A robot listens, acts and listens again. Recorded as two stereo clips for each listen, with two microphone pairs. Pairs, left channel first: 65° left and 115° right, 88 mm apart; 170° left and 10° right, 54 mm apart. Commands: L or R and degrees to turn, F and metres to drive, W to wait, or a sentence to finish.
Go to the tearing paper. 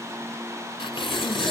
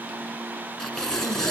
L90
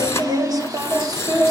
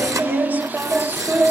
F1.0
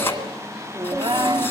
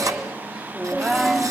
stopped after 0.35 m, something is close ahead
Blocked. The tearing paper is further on, straight ahead.